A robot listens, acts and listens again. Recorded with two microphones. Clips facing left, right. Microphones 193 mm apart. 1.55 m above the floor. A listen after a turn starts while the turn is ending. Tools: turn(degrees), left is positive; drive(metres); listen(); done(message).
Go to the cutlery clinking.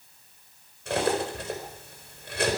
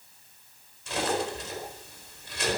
turn(degrees=60)
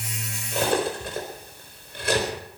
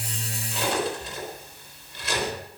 turn(degrees=55)
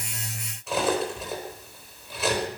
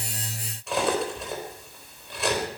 drive(metres=1.0)
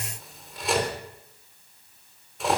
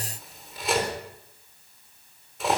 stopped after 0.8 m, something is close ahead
done("Something is in my way. I am facing the cutlery clinking but have not reached it.")